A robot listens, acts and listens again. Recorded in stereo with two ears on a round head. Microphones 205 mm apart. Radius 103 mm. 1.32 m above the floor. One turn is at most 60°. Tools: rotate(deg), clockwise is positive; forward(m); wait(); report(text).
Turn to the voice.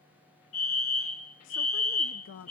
rotate(-55)
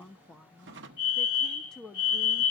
report("Facing the woman speaking.")